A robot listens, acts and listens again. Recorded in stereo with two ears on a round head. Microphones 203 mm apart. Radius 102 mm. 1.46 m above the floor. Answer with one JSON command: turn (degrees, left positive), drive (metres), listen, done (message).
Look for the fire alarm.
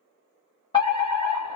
{"turn": 20}
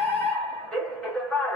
{"done": "Facing the fire alarm."}